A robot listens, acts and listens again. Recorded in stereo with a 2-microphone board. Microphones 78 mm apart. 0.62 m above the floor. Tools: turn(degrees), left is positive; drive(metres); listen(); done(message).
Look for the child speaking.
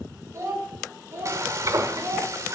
turn(degrees=-25)
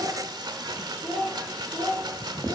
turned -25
turn(degrees=20)
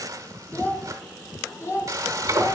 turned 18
turn(degrees=40)
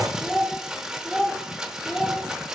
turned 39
done("Found it: a child speaking, straight ahead, 1 to 2 m away.")